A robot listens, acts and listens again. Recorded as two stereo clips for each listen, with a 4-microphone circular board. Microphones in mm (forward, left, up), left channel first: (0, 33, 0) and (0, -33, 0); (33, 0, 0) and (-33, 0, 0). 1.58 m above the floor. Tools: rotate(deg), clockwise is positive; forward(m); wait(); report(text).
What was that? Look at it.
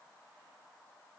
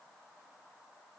wait()
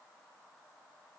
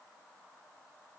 wait()
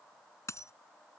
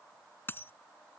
rotate(-55)
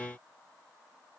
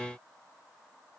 report("Facing where the dropped coin came from. I can't hear it now.")